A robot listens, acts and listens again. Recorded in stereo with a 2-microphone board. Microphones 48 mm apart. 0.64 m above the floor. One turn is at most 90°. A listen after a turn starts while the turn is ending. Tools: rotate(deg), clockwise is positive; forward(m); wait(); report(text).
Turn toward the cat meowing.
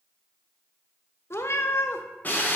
rotate(-60)
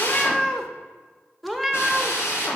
report("Found it: a cat meowing, straight ahead, under 1 m away.")